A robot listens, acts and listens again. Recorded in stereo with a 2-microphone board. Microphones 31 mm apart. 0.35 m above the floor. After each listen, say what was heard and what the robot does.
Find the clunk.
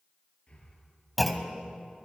Turn 30° left.
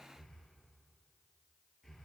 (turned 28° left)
Keep listening.
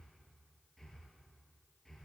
I heard a clunk, but can't make it out now. It was about 25° right or 150° left.